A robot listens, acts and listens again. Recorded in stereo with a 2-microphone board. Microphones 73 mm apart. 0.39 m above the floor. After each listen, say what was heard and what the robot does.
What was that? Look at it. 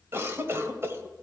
The cough: about 35° right or 145° right. Turn 35° right.
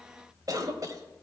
So it is at 105° right. Turn 105° right.
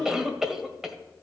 The cough is now 10° right. Turn 10° right.
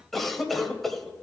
Facing the cough, 1 to 2 m away.